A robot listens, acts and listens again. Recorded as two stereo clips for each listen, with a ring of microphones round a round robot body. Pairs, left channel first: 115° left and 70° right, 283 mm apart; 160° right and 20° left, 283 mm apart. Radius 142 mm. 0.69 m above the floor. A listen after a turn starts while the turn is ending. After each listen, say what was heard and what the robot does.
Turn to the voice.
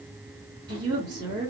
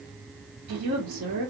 Facing the woman speaking.